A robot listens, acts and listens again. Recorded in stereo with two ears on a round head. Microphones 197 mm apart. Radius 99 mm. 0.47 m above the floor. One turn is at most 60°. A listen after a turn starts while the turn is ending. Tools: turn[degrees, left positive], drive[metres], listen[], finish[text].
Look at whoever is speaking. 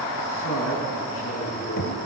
Thought: The man speaking: about 65° left or 115° left.
Action: turn[60]
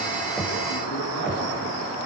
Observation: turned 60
Action: listen[]
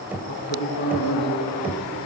Thought: So it is at 50° left.
Action: turn[50]
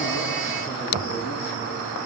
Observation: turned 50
Action: listen[]
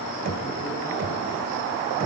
Action: listen[]
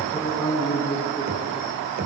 Thought: The man speaking is now 10° left.
Action: turn[10]
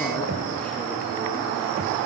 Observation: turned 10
Action: finish[Facing the man speaking, over 4 m away.]